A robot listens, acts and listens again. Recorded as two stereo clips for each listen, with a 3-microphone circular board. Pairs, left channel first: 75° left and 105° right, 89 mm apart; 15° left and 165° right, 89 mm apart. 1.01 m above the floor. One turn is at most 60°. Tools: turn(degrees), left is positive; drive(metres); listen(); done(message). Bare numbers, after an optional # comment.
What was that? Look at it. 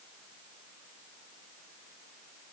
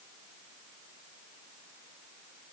listen()
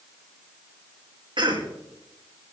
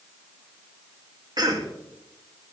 # The cough: 130° right.
turn(-60)
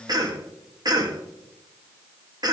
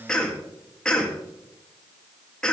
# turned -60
# The cough is now 65° right.
turn(-60)
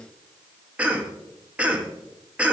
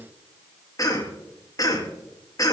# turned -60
# The cough is now 30° right.
turn(-30)
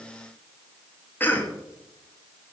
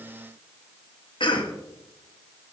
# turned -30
done("Found it: a cough, straight ahead, 1 to 2 m away.")